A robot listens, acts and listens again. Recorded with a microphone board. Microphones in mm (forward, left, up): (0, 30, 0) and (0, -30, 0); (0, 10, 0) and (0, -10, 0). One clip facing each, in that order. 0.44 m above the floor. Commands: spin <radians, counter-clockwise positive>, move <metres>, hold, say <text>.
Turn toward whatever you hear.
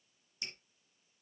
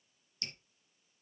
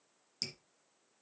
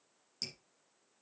spin 0.26
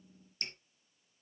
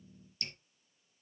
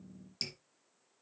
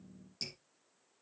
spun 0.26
spin 2.62
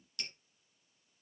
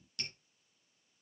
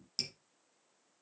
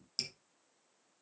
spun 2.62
say Facing the dripping, 2 to 4 m away.